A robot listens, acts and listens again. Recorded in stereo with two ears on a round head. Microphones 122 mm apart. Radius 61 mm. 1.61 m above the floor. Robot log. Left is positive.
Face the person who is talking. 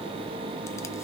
cmd idle
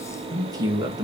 note: The man speaking: about 30° right or 150° right.
cmd yaw -30
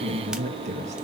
note: So it is at 125° right.
cmd yaw -125
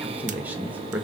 note: The man speaking is now 10° right.
cmd yaw -10
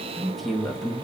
end: Facing the man speaking.